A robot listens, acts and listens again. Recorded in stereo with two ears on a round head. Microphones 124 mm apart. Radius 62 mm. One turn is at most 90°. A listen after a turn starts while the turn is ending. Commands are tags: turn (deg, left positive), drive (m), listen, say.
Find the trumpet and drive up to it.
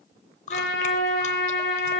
<turn deg="65"/>
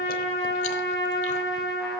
<drive m="1.0"/>
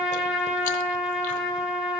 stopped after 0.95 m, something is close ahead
<say>Blocked. The trumpet is further on, straight ahead.</say>